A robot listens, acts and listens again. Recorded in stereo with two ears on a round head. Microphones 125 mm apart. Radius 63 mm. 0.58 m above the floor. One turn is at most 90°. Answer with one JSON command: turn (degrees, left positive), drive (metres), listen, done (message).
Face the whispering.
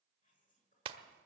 {"turn": 65}
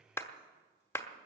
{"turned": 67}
{"listen": true}
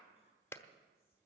{"listen": true}
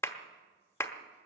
{"done": "I heard whispering, but can't make it out now. It was about straight ahead or 50° left."}